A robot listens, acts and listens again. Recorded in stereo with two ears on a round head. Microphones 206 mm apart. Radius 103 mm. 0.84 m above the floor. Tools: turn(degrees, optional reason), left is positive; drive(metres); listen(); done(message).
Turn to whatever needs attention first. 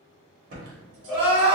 turn(degrees=15, reason="The crying: about 15° left or 165° left.")
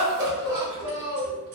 done("Facing the crying, 1 to 2 m away.")